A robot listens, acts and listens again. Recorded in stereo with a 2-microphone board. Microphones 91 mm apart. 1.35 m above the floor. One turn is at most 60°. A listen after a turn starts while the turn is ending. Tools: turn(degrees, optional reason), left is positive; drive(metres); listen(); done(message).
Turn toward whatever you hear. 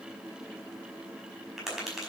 turn(degrees=-30)
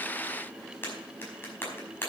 turn(degrees=25, reason="So it is at 25° left.")
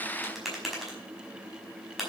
done("Found it: tapping, straight ahead.")